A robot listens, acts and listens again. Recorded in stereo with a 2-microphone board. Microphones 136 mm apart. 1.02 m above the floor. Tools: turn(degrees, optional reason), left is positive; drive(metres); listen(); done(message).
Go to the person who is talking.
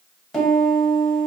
listen()
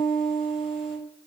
listen()
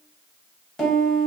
done("I can't make out anyone speaking, only a piano.")